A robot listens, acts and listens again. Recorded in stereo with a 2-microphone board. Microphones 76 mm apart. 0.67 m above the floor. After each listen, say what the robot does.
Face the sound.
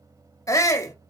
Turn 45° left.
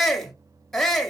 Facing the shout, under 1 m away.